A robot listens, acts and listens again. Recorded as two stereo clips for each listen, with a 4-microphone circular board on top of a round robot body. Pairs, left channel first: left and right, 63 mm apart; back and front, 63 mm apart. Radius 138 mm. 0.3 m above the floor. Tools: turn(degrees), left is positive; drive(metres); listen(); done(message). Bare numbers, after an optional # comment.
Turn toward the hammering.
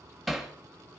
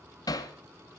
# The hammering: straight behind.
turn(180)
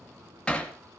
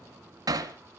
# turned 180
# The hammering is now 15° left.
turn(15)
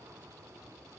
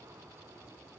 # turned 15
listen()
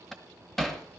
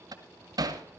done("Facing the hammering, 2 to 4 m away.")